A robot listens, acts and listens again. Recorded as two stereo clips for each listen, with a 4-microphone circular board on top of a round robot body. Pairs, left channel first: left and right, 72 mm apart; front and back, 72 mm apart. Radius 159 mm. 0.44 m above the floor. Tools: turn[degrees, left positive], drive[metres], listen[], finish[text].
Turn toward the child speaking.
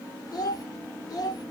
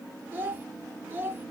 Thought: The child speaking: 115° left.
Action: turn[115]
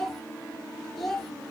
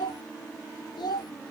Action: finish[Facing the child speaking, under 1 m away.]